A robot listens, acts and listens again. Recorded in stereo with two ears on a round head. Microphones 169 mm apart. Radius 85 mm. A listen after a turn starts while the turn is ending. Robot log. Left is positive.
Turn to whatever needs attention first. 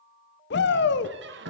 note: The shout: about 60° left or 120° left.
cmd yaw +60
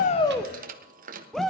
end: Found it: a shout, straight ahead.